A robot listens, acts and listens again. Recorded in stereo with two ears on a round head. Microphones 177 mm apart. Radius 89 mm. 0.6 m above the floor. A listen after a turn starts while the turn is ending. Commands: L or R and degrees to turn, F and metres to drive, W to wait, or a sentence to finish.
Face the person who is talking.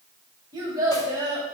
R20
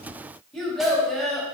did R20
Facing the child speaking, 2 to 4 m away.